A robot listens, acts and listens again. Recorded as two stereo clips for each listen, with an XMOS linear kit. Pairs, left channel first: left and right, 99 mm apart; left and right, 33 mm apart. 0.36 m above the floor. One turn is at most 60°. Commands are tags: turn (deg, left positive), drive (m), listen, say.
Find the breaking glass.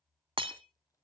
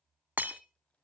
<turn deg="-60"/>
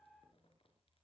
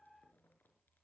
<listen/>
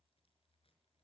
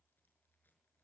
<say>I heard breaking glass, but can't make it out now. It was about 5° right or 55° right.</say>